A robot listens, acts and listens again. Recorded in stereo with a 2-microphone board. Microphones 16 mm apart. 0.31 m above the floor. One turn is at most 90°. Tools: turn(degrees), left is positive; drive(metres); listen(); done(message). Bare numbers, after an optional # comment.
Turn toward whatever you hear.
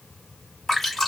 # The dripping: about 30° left or 150° left.
turn(30)
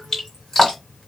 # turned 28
# So it is at 115° left.
turn(90)
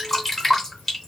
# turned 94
# The dripping is now 25° left.
turn(25)
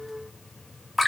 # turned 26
done("Facing the dripping.")